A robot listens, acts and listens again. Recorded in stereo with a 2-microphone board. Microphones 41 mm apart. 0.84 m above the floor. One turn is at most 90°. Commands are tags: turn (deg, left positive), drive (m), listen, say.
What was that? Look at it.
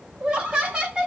<turn deg="-20"/>
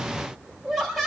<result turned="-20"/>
<say>Found it: laughter, straight ahead, 2 to 4 m away.</say>